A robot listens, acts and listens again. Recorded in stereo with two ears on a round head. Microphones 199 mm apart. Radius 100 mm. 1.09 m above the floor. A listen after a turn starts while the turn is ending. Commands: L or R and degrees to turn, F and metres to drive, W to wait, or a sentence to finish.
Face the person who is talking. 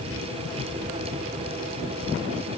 W
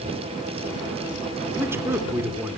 R30
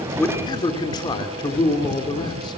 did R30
L20
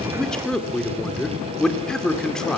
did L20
Facing the man speaking, 2 to 4 m away.